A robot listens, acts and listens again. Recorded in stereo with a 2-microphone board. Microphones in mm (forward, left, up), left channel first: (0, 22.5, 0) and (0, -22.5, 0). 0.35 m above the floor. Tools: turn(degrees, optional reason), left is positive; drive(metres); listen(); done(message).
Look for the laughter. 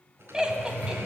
turn(degrees=-20, reason="The laughter: about 20° right or 160° right.")
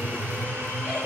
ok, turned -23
listen()
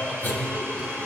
listen()
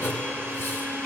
done("I heard laughter, but can't make it out now. It was about straight ahead or 135° right.")